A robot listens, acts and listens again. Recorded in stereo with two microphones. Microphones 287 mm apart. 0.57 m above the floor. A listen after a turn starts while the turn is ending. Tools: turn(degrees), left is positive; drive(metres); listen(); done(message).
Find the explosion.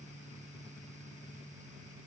listen()
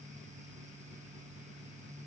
listen()
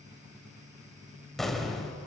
turn(degrees=30)
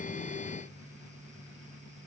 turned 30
listen()
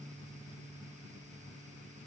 done("I heard an explosion, but can't make it out now. It was about 30° right or 150° left.")